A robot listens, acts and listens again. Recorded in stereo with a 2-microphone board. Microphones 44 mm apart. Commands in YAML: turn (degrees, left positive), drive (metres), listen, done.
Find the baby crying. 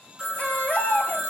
turn: 45
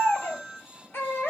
turn: 85
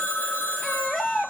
turn: 10
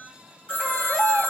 done: "Facing the baby crying."